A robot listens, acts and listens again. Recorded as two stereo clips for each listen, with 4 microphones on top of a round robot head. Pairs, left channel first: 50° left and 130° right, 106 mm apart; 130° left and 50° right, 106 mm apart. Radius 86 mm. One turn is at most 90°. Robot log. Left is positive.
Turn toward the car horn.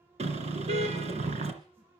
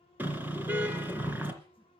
note: The car horn: 120° right.
cmd yaw -90
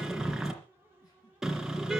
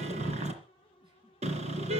note: The car horn is now 45° right.
cmd yaw -45
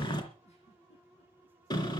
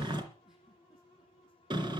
end: Found it: a car horn, straight ahead, 2 to 4 m away.